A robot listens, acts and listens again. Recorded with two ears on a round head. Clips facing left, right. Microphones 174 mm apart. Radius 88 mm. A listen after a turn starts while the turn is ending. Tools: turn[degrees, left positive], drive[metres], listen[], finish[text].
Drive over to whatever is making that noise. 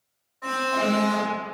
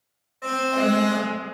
Thought: The alarm: about 30° right or 150° right.
Action: turn[-30]
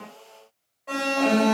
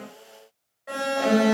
Thought: So it is at 10° right.
Action: turn[-10]
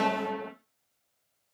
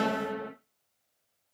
Action: drive[1.0]
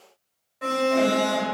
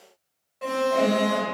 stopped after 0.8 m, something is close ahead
Action: finish[I am next to the alarm.]